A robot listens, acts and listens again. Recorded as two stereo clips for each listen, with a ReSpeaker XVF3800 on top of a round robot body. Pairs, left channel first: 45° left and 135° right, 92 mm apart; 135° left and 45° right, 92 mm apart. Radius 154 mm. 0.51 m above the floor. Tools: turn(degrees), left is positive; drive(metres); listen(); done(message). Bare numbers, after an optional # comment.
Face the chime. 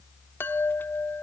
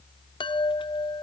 # The chime: 110° left.
turn(110)
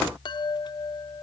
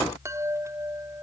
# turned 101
# The chime is now 10° left.
turn(10)
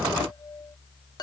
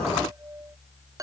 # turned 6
done("Found it: a chime, straight ahead.")